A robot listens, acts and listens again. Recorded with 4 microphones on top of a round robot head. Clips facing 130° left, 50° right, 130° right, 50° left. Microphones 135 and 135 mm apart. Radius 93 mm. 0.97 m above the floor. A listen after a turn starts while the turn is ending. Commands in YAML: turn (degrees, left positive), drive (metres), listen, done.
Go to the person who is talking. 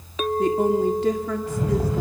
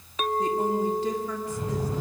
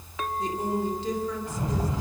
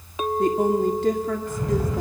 turn: 95
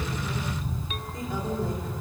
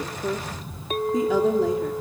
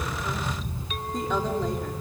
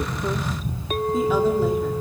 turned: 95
listen: true
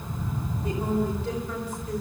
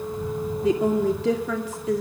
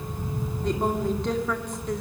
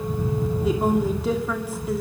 turn: -35
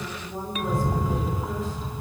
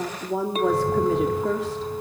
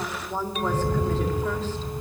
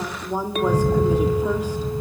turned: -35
turn: -25
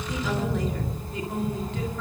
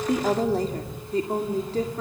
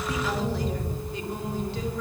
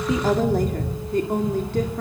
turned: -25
drive: 1.0
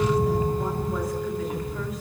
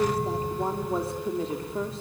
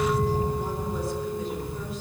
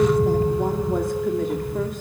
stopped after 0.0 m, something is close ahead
listen: true
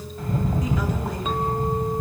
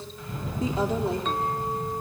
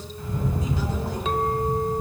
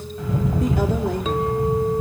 listen: true
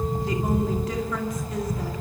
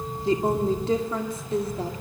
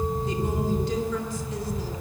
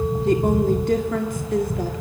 turn: 10
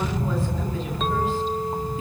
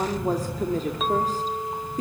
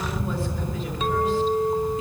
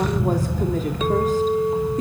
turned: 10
listen: true
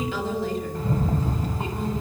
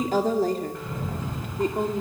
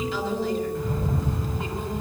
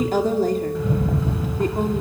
done: "Blocked. The woman speaking is further on, straight ahead."